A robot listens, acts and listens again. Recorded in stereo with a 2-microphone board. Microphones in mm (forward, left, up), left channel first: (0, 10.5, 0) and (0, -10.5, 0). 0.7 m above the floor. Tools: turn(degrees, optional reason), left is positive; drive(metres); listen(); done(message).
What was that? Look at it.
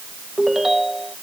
turn(degrees=-15, reason="The ringtone: about 15° right or 165° right.")
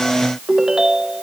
turn(degrees=-150, reason="So it is at 150° right.")
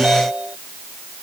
turn(degrees=-65, reason="The ringtone is now 65° right.")
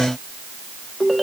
done("Facing the ringtone.")